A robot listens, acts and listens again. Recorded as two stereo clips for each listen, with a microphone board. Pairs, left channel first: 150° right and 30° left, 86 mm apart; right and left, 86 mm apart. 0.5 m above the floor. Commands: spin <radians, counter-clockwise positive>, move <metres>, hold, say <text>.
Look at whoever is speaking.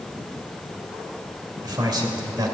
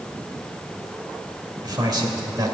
spin 1.05
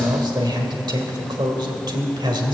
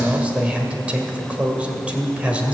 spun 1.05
spin 0.26
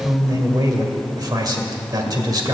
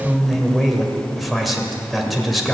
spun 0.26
say Found it: a man speaking, straight ahead, 1 to 2 m away.